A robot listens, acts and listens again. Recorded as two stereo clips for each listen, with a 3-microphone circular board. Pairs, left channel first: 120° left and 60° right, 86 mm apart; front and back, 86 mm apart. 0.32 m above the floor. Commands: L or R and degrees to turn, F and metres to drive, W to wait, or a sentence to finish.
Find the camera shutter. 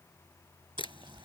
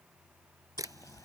L130
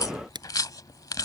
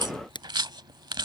R30
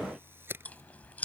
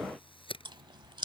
Found it: a camera shutter, straight ahead.